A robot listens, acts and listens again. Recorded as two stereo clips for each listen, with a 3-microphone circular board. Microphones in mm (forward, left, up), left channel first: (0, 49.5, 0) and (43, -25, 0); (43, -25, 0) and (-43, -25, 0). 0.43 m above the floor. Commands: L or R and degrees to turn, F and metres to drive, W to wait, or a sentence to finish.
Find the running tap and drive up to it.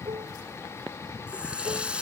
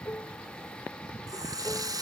R135
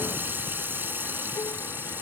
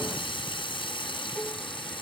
F1.0
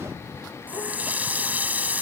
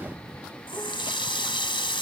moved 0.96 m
L10
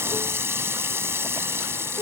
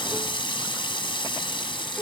F1.0
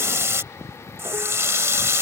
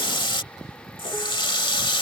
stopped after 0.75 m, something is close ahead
Arrived at the running tap, straight ahead.